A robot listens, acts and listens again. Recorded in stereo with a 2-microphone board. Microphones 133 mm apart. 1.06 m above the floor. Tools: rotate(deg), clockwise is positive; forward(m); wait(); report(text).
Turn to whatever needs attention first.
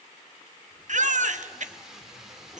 rotate(65)
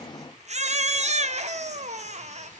rotate(55)
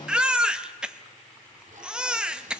report("Facing the baby crying, under 1 m away.")